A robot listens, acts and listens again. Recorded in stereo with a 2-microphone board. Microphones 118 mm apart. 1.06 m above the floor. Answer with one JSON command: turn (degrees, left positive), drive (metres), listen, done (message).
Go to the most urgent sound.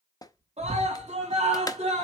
{"turn": -65}
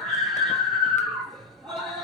{"drive": 1.0}
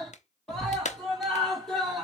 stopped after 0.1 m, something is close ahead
{"done": "Blocked. The scream is further on, straight ahead."}